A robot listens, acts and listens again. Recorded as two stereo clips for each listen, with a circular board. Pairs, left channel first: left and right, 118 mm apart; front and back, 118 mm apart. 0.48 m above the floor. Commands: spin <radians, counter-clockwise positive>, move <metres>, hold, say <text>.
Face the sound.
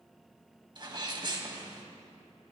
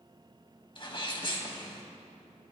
spin -0.70
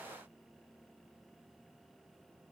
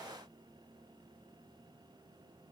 say I heard a sneeze from this way, but can't make it out now.